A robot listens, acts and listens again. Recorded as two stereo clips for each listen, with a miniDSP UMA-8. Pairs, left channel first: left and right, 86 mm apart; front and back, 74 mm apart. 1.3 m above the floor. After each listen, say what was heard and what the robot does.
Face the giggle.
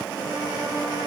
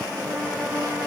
Keep listening.
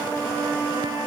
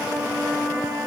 Keep listening.
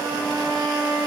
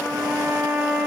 I can't make out a giggle, only a trumpet.